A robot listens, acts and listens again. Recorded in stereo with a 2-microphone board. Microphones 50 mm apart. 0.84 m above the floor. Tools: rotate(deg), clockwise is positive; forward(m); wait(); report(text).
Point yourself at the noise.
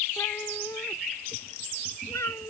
rotate(-75)
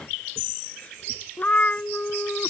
rotate(-25)
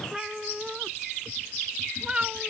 rotate(20)
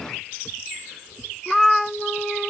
report("Facing the cat meowing.")